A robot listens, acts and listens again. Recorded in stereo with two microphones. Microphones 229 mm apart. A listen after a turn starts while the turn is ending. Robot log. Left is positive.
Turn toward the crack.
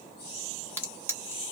cmd yaw +30
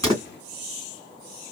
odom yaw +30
cmd idle
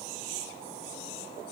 end: I heard a crack, but can't make it out now. It was about 20° right or 140° left.